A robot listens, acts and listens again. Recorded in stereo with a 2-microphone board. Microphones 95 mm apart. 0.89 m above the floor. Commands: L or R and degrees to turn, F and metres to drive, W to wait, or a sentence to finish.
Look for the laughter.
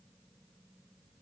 W
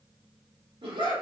R60
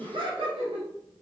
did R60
R70
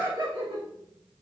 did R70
R45
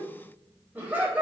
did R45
R15
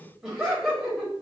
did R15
Found it: laughter, straight ahead.